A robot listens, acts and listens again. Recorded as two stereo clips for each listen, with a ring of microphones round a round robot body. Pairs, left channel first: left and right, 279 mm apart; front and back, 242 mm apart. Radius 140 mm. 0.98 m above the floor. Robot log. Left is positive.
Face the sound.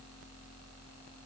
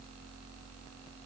cmd idle
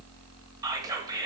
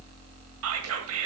note: The whispering: 165° right.
cmd yaw -165
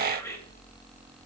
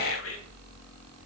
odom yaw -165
cmd idle
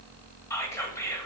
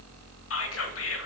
note: The whispering is now 10° left.
cmd yaw +10
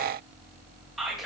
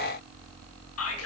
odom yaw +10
end: Facing the whispering.